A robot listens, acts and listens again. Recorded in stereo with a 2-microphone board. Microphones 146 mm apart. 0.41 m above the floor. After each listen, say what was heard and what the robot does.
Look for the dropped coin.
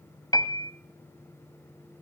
Keep listening.
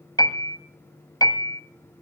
Keep listening.
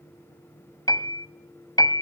I can't make out a dropped coin to turn to.